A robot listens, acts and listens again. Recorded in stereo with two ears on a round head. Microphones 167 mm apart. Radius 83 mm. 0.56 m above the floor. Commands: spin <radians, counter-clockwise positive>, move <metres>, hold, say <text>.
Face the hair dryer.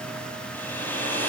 spin 0.52
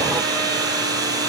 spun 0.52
spin -0.35
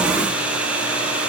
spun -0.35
say Facing the hair dryer.